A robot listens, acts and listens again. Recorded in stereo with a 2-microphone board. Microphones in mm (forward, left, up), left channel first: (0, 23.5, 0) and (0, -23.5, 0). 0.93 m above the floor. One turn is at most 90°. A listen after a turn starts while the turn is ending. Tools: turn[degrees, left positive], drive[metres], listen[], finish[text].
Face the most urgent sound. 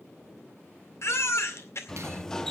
Thought: The baby crying: about 65° left or 115° left.
Action: turn[65]
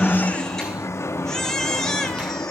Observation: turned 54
Thought: So it is at 10° left.
Action: turn[10]
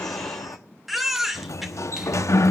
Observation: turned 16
Action: finish[Found it: a baby crying, straight ahead, 2 to 4 m away.]